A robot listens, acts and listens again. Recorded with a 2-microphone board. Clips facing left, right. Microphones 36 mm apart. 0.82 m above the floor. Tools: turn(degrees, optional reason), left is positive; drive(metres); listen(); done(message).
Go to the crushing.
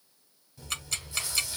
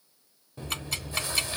listen()
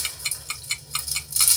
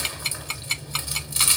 listen()
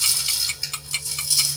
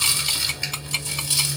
done("I can't make out crushing, only chewing and ticking.")